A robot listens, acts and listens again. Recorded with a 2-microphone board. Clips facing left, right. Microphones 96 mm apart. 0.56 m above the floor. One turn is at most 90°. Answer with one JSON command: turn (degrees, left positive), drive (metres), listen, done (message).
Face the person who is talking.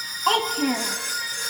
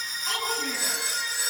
{"turn": 60}
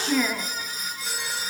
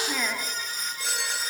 {"done": "Facing the child speaking."}